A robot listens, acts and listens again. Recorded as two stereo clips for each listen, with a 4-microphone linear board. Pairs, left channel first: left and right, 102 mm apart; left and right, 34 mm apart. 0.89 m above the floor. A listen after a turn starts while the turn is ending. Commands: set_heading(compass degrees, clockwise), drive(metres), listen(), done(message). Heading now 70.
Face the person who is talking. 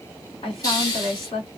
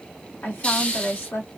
set_heading(0)
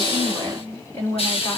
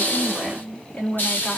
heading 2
set_heading(332)
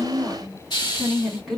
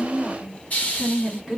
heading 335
done("Facing the woman speaking.")